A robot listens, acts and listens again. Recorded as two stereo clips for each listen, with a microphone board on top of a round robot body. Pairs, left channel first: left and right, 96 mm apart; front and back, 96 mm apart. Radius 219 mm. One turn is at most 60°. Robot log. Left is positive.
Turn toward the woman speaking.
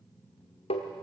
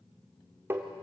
cmd idle
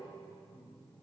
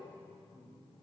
cmd idle
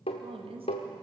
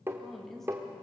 note: The woman speaking: 85° right.
cmd yaw -60
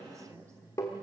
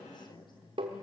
note: The woman speaking is now 35° right.
cmd yaw -35
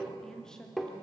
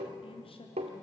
end: Found it: a woman speaking, straight ahead.